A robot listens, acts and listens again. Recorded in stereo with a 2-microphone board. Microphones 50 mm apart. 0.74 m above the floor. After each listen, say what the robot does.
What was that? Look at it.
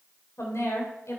Turn 75° left.
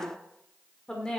Turn 15° left.
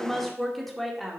Found it: a woman speaking, straight ahead.